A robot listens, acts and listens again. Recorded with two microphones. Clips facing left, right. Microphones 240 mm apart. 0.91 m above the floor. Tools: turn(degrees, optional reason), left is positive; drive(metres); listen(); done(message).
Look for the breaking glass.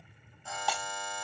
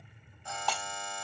turn(degrees=30)
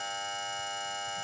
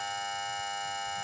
listen()
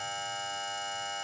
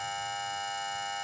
done("I heard breaking glass, but can't make it out now. It was about 20° right or 140° left.")